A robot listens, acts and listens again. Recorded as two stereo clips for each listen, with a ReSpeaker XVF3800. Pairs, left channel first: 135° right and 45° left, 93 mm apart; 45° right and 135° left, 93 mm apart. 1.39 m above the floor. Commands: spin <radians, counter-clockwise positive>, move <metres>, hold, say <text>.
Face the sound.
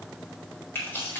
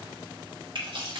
spin 2.79
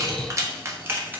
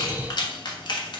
spin -0.44
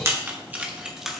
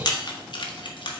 spin -0.70
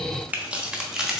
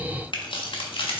spin -0.70
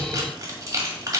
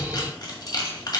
say Facing the keys jangling, 1 to 2 m away.